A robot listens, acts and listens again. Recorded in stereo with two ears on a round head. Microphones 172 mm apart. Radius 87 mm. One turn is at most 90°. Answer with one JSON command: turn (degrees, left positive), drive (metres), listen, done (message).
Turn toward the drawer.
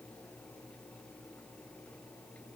{"listen": true}
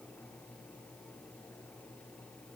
{"listen": true}
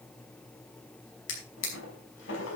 {"turn": 70}
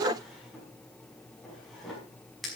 {"done": "Facing the drawer."}